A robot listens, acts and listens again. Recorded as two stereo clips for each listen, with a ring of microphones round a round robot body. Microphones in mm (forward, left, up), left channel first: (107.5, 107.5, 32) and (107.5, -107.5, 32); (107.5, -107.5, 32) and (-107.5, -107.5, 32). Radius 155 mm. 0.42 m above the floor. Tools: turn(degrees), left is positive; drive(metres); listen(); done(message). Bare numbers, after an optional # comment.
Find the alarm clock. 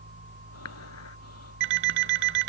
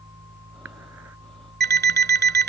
# The alarm clock: 135° right.
turn(-135)
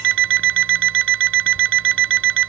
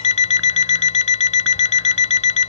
# The alarm clock is now 60° right.
turn(-60)
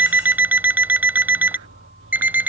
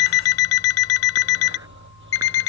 done("Found it: an alarm clock, straight ahead.")